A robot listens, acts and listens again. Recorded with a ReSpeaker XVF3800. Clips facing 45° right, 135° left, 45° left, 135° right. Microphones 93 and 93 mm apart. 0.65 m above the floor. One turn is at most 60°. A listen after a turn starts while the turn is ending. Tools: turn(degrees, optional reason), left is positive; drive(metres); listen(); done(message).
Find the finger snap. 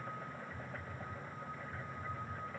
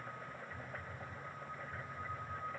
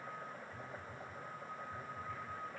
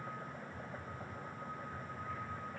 listen()
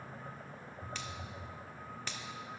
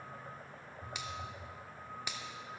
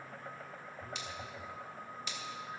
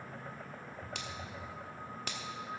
turn(degrees=-60, reason="The finger snap: 150° right.")
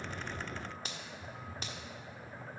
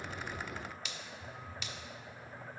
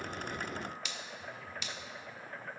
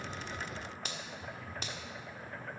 turn(degrees=-60, reason="The finger snap is now 90° right.")
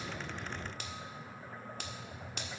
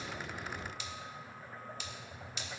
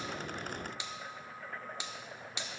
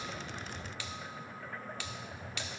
turn(degrees=-20, reason="The finger snap is now 20° right.")
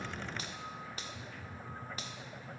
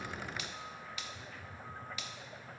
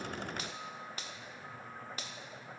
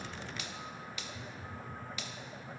done("Found it: a finger snap, straight ahead.")